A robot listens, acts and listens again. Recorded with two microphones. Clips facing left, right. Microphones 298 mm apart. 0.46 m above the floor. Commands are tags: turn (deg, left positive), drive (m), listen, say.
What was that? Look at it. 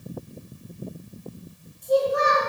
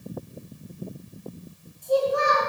<turn deg="25"/>
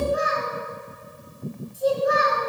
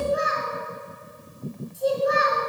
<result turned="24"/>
<say>Found it: a child speaking, straight ahead, 2 to 4 m away.</say>